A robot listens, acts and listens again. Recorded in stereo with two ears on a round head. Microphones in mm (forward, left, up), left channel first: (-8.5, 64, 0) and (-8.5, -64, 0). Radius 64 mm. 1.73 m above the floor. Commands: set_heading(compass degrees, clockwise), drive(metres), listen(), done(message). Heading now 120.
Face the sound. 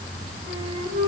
set_heading(195)
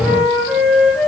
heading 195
done("Facing the flute, over 4 m away.")